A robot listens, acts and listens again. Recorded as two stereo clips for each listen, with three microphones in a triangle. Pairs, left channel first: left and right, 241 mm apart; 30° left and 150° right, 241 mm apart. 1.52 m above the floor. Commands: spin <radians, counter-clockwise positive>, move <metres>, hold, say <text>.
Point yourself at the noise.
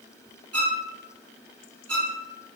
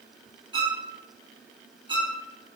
spin -1.40
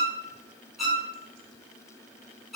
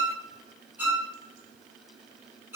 say Found it: a violin, straight ahead.